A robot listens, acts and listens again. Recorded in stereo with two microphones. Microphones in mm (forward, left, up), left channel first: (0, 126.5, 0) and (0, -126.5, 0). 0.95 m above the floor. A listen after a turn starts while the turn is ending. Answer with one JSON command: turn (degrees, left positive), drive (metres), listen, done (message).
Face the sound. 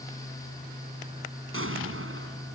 {"turn": -55}
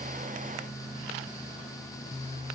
{"listen": true}
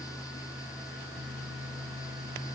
{"done": "I heard an explosion, but can't make it out now. It was about straight ahead or 70° right."}